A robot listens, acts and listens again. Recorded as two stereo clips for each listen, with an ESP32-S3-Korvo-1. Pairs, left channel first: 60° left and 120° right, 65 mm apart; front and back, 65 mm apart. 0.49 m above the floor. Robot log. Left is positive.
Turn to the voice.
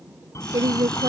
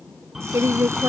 note: The woman speaking: 135° right.
cmd yaw -135
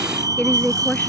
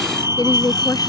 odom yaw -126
note: The woman speaking is now 10° right.
cmd yaw -10
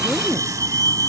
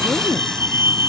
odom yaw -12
cmd idle
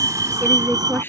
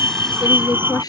end: Found it: a woman speaking, straight ahead.